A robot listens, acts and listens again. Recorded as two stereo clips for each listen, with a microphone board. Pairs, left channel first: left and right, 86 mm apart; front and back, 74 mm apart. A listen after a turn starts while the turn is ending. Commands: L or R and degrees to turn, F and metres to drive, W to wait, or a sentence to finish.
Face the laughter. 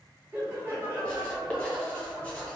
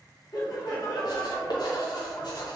R25
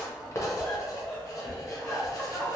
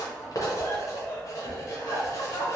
Facing the laughter.